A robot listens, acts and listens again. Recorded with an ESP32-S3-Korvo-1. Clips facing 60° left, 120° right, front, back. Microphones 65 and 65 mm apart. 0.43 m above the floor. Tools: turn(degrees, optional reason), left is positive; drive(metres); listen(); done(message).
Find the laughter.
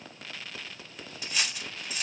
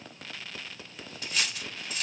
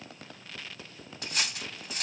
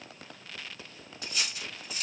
listen()
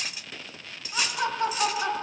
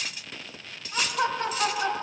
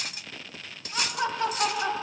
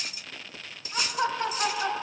turn(degrees=-130, reason="The laughter: 130° right.")
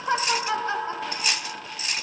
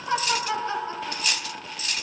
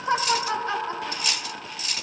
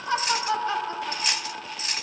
turn(degrees=15, reason="The laughter is now 15° left.")
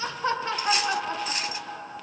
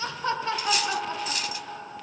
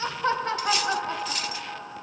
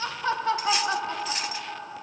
done("Facing the laughter.")